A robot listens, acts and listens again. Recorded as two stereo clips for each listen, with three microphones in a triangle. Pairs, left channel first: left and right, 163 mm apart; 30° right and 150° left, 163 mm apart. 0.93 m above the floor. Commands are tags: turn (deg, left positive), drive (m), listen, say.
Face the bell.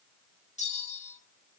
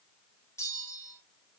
<turn deg="45"/>
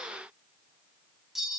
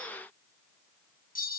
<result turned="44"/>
<say>Facing the bell, 1 to 2 m away.</say>